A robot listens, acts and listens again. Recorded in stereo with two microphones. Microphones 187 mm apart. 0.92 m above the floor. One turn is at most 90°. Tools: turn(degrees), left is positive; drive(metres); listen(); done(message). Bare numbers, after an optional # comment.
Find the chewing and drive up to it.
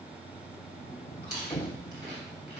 # The chewing: about 60° right or 120° right.
turn(-60)
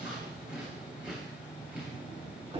# So it is at 10° right.
turn(-10)
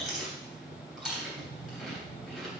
drive(1.0)
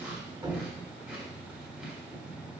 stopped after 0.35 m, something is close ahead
done("Blocked. The chewing is further on, straight ahead.")